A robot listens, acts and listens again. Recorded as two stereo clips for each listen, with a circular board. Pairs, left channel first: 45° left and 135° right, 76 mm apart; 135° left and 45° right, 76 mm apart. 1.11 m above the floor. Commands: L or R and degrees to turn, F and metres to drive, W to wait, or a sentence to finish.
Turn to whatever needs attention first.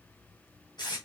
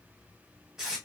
W
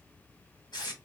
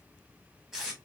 W
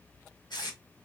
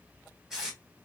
I can't make out anything urgent to turn to.